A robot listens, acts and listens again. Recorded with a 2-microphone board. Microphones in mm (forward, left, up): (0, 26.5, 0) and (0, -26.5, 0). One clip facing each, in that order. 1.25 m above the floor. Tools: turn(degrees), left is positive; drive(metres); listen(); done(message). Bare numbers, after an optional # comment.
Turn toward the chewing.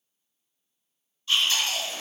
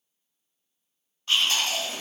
# The chewing: about 60° right or 120° right.
turn(-60)
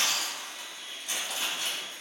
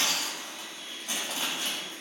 # So it is at 45° right.
turn(-45)
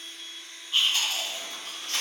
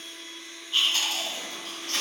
done("Facing the chewing.")